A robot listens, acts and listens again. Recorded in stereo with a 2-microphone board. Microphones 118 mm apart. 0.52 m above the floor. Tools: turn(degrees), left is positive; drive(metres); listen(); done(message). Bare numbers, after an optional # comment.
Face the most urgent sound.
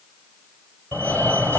# The fire alarm: about 15° left or 165° left.
turn(15)
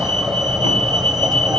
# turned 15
done("Found it: a fire alarm, straight ahead, 2 to 4 m away.")